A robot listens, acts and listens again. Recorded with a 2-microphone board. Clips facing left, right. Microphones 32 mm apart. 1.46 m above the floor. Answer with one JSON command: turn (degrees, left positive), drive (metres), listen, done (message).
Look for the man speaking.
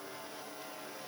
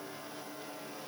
{"listen": true}
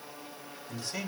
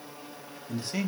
{"turn": -30}
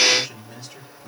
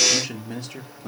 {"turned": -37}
{"turn": -120}
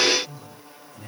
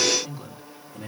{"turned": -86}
{"turn": -35}
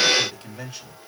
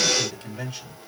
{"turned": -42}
{"done": "Found it: a man speaking, straight ahead."}